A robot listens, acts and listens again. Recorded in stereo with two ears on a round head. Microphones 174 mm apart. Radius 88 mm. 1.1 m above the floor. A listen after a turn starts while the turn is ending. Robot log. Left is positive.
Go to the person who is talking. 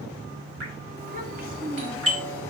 note: The child speaking: about 45° right or 135° right.
cmd yaw -45
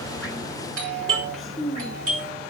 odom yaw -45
cmd fwd 1.0
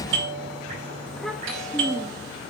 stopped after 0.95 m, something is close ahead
end: I am next to the child speaking.